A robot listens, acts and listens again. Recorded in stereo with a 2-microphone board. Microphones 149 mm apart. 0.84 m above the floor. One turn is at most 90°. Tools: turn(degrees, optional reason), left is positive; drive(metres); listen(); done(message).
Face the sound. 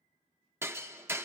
turn(degrees=-15, reason="The hammering: about 15° right or 165° right.")
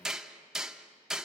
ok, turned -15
done("Facing the hammering.")